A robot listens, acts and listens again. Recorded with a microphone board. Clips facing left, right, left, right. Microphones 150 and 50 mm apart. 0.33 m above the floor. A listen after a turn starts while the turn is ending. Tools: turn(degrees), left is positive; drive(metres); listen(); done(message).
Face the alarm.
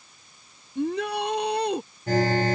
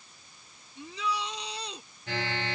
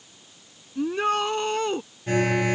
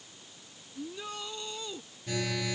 turn(degrees=45)
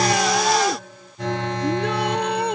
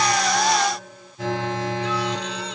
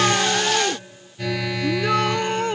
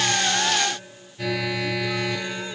done("Found it: an alarm, straight ahead.")